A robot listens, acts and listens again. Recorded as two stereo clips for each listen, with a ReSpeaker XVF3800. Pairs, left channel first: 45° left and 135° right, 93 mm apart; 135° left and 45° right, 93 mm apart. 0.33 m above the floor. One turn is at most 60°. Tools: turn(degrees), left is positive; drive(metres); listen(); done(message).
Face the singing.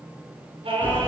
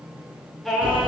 turn(degrees=-60)
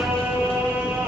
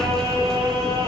turn(degrees=-60)
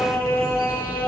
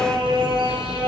turn(degrees=-25)
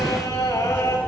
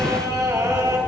done("Found it: singing, straight ahead, 1 to 2 m away.")